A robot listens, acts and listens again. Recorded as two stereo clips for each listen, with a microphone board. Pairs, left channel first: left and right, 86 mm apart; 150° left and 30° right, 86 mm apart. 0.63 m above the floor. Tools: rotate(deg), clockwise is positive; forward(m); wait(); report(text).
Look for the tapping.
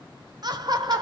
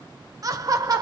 wait()
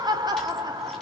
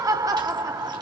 wait()
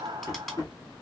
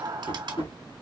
rotate(-140)
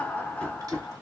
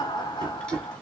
rotate(-10)
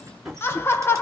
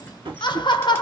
report("Facing the tapping, 2 to 4 m away.")